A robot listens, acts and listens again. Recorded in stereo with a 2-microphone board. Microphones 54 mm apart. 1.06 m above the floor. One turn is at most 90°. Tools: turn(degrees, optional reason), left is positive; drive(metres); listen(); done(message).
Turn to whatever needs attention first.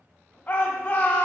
turn(degrees=25, reason="The shout: about 25° left or 155° left.")
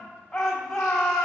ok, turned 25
done("Facing the shout.")